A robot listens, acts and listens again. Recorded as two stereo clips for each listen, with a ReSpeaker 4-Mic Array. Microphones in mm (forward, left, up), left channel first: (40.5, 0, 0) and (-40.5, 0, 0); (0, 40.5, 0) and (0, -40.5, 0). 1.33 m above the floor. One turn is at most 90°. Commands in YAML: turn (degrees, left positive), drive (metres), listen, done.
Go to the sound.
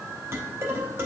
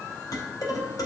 turn: 90
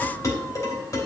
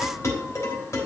turn: 40
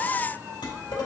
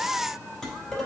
drive: 1.0
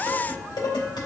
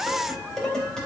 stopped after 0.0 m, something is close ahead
turn: 10
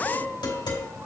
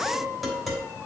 done: "Blocked. The dishes clattering is further on, straight ahead."